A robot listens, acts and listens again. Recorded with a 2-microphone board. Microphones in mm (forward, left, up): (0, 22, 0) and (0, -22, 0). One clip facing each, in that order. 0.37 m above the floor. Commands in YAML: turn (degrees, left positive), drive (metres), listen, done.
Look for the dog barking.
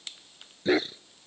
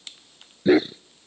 turn: -30
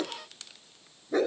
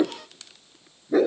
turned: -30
turn: -30
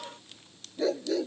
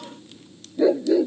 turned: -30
turn: -15
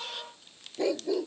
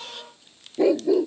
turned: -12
turn: -30
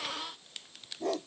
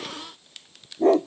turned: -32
turn: -145
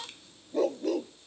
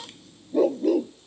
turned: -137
done: "Found it: a dog barking, straight ahead."